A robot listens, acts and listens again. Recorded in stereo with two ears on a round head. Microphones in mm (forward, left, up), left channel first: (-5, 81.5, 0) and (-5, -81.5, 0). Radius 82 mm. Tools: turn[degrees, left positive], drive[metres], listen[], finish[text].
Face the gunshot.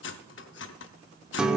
Action: listen[]
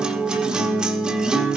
Action: listen[]
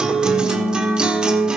Action: finish[I can't make out a gunshot to turn to.]